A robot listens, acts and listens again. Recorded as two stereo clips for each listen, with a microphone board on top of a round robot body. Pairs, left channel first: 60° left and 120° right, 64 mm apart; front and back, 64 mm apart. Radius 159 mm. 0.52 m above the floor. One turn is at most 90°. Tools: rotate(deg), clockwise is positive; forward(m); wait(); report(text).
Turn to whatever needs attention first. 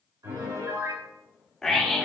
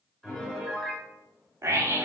rotate(-90)
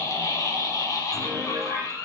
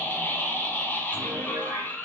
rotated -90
rotate(-55)
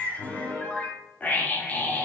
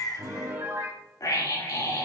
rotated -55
report("Facing the scream, 2 to 4 m away.")